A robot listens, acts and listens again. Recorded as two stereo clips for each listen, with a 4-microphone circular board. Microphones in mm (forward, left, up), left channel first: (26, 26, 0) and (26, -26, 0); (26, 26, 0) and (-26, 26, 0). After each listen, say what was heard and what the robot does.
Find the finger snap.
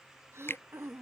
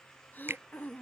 The finger snap: 135° left. Turn 135° left.
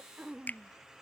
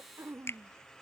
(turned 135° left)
The finger snap is now 35° left. Turn 35° left.
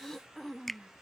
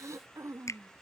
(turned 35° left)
Facing the finger snap.